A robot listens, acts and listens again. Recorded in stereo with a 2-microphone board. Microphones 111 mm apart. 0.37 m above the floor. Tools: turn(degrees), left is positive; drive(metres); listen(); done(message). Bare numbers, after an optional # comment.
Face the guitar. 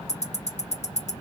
listen()
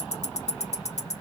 listen()
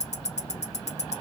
done("I can't make out a guitar to turn to.")